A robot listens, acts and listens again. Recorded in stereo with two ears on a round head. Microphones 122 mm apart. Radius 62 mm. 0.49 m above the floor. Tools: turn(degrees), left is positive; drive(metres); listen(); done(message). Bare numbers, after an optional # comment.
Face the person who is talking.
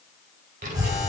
# The child speaking: about 60° right or 120° right.
turn(-60)
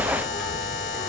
done("Facing the child speaking, 2 to 4 m away.")